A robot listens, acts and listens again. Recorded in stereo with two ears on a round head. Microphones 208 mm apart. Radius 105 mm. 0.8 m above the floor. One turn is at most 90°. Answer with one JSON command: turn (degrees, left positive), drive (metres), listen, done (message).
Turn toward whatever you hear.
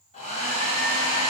{"turn": 30}
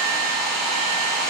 {"done": "Found it: a hair dryer, straight ahead, 2 to 4 m away."}